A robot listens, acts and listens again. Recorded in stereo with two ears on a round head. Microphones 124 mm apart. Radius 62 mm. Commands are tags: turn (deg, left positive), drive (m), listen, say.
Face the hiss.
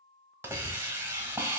<turn deg="-15"/>
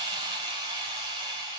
<turn deg="-150"/>
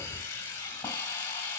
<turn deg="15"/>
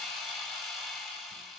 <say>Found it: a hiss, straight ahead.</say>